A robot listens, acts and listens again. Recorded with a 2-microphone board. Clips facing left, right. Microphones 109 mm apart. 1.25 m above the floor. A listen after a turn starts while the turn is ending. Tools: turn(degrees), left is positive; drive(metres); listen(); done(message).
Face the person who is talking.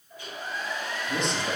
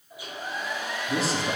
turn(degrees=-30)
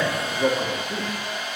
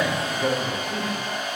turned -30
turn(degrees=30)
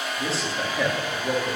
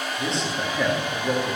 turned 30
done("Facing the man speaking.")